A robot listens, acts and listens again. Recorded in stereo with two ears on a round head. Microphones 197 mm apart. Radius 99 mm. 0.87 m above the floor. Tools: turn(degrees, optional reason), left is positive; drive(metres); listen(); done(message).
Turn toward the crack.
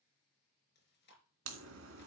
turn(degrees=-60, reason="The crack: about 60° right or 120° right.")
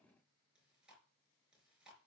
listen()
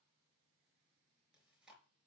done("I heard a crack, but can't make it out now. It was about straight ahead or 60° right.")